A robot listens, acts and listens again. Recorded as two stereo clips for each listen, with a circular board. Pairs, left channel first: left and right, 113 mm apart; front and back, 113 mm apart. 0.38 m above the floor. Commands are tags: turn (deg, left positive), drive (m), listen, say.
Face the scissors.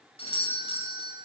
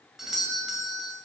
<listen/>
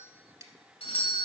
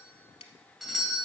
<turn deg="-30"/>
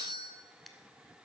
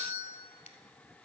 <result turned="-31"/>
<say>Found it: scissors, straight ahead, under 1 m away.</say>